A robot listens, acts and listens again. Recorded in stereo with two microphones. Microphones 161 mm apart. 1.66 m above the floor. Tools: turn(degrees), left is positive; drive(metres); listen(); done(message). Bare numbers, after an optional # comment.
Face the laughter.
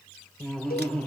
turn(30)
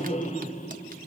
# So it is at 135° left.
turn(135)
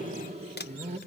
# The laughter is now 45° right.
turn(-45)
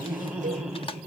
done("Facing the laughter, 2 to 4 m away.")